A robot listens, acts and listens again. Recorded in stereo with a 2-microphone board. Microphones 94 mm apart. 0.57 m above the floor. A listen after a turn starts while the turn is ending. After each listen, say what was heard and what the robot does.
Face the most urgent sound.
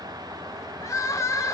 The crying: about 35° left or 145° left. Turn 35° left.
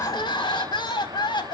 So it is at 105° left. Turn 105° left.
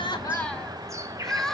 Found it: crying, straight ahead, 1 to 2 m away.